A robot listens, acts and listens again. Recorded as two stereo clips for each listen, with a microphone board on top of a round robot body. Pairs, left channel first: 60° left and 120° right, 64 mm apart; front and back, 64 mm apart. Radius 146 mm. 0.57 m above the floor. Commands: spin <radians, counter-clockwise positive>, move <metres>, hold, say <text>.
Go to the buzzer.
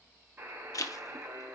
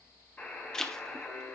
spin -1.13
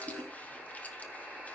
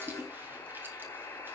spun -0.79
spin -0.35
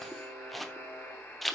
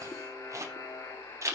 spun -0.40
move 1.0
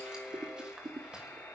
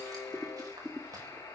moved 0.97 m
move 1.0
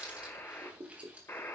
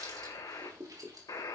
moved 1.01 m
spin 0.17
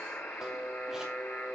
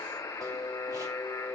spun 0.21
move 1.0
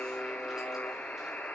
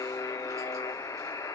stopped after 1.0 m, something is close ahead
spin -0.17
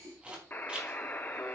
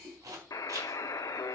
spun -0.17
say Arrived at the buzzer, straight ahead.